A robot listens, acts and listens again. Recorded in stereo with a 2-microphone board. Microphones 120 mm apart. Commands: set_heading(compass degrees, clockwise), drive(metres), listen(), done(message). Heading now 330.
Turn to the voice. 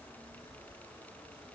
listen()
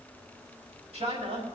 set_heading(35)
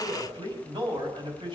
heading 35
set_heading(80)
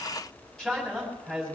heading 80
done("Found it: a man speaking, straight ahead.")